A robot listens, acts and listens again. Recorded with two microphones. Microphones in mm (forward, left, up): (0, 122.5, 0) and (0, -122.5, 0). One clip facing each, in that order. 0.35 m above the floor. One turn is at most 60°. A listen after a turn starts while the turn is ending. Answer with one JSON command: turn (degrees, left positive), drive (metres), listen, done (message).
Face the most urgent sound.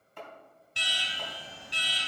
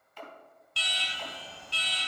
{"turn": 20}
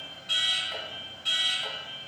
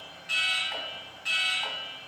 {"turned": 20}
{"turn": 60}
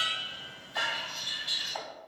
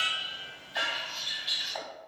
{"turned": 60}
{"turn": 60}
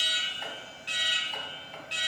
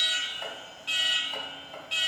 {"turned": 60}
{"turn": 20}
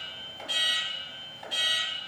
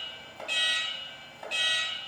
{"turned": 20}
{"turn": 10}
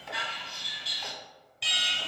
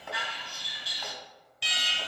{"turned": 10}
{"done": "Found it: an alarm, straight ahead."}